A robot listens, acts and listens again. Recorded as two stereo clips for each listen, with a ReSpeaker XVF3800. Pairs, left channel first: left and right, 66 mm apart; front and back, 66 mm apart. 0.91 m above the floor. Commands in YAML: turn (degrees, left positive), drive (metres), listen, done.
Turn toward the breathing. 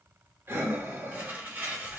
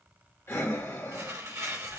turn: -40
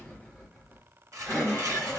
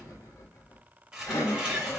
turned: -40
turn: 10
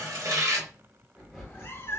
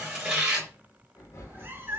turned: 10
done: "Found it: breathing, straight ahead, 1 to 2 m away."